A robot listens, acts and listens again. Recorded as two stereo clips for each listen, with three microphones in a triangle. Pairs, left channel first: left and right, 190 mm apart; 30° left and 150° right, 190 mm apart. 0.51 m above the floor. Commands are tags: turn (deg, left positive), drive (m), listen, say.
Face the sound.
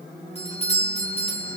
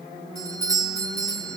<turn deg="140"/>
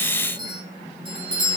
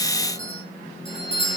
<turn deg="-30"/>
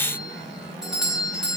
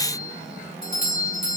<say>Facing the doorbell.</say>